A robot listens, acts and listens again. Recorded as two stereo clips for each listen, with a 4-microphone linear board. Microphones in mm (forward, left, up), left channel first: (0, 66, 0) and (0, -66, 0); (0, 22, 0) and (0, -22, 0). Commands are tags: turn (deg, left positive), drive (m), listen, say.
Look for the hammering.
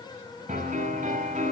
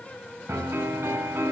<listen/>
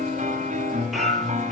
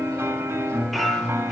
<turn deg="30"/>
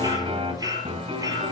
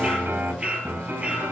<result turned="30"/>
<turn deg="-30"/>
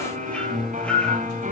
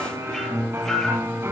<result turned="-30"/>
<turn deg="10"/>
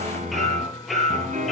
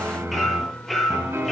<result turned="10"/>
<say>Found it: hammering, straight ahead.</say>